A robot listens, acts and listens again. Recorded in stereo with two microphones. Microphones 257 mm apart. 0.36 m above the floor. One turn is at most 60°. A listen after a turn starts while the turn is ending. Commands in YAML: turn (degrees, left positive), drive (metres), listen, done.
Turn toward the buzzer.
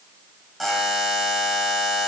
turn: 30
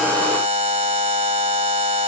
turn: -30
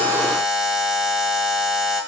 done: "Found it: a buzzer, straight ahead."